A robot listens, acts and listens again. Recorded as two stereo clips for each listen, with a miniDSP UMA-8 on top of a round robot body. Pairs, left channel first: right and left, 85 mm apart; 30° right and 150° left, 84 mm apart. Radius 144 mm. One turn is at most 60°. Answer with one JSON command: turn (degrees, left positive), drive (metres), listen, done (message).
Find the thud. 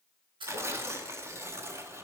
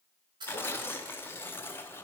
{"turn": 60}
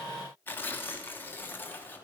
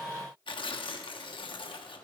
{"turn": 55}
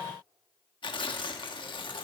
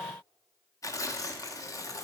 {"done": "I heard a thud from this way, but can't make it out now."}